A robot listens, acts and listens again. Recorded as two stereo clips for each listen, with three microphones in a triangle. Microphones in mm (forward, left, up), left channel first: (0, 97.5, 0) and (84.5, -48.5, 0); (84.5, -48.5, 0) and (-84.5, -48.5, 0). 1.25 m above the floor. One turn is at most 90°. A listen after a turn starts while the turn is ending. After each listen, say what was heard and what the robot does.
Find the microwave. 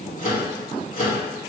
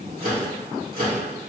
The microwave: 155° left. Turn 90° left.
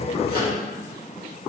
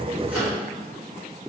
Nothing new. It was at 65° left. Turn 65° left.
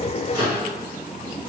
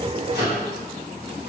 Facing the microwave, 2 to 4 m away.